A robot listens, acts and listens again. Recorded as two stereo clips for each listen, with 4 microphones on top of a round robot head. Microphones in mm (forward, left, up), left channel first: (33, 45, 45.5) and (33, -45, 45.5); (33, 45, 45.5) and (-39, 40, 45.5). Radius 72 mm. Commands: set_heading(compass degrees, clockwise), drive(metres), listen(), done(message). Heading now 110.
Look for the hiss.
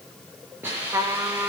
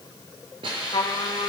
set_heading(275)
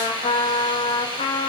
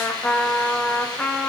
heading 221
set_heading(271)
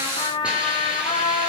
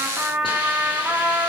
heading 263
set_heading(273)
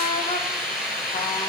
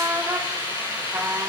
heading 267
done("Found it: a hiss, straight ahead.")